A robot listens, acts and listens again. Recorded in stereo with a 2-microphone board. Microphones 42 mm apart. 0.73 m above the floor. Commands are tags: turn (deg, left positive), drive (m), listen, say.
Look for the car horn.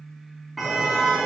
<turn deg="30"/>
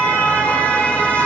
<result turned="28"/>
<turn deg="150"/>
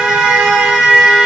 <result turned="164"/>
<turn deg="-10"/>
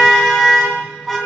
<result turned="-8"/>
<say>Found it: a car horn, straight ahead.</say>